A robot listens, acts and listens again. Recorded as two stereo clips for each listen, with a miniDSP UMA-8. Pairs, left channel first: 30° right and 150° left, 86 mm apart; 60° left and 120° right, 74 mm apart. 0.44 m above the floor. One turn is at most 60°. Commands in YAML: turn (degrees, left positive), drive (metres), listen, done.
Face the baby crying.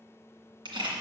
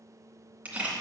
listen: true
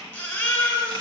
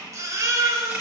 turn: -60
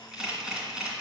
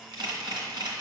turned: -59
turn: -40
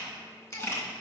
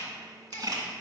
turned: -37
listen: true
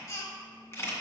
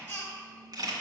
done: "Facing the baby crying, 1 to 2 m away."